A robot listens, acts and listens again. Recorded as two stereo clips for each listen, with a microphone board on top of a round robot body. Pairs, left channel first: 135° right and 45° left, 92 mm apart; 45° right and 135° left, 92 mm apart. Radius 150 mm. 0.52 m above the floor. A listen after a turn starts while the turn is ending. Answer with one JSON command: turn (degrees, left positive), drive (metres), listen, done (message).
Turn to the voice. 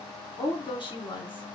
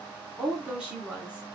{"turn": -150}
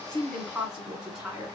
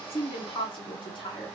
{"turn": -40}
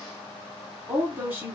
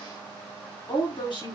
{"turn": -25}
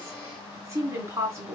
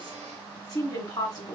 {"turn": -10}
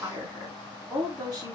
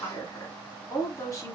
{"done": "Facing the woman speaking, 2 to 4 m away."}